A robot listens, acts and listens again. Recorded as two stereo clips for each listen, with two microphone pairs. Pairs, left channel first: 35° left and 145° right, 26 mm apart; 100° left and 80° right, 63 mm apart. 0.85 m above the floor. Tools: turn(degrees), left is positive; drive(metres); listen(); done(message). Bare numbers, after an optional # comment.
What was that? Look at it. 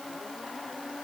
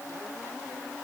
listen()
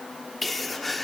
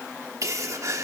# The sneeze: 55° right.
turn(-55)
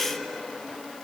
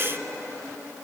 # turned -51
done("I heard a sneeze from this way, but can't make it out now.")